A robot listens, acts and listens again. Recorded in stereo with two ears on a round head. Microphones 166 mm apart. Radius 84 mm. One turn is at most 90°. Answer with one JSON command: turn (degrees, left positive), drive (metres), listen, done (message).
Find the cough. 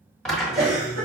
{"turn": -60}
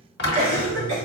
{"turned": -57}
{"turn": -60}
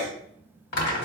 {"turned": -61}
{"done": "Found it: a cough, straight ahead."}